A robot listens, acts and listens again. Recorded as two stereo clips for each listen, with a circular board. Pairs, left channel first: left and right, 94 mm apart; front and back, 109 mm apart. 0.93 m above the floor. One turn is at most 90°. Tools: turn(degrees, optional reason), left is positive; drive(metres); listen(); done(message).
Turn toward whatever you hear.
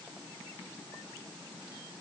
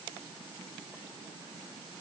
listen()
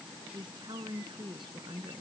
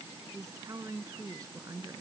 turn(degrees=-90, reason="The woman speaking: 120° right.")
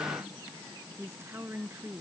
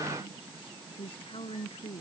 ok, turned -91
turn(degrees=-25, reason="The woman speaking is now 25° right.")
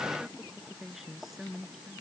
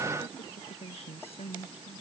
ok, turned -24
done("Found it: a woman speaking, straight ahead.")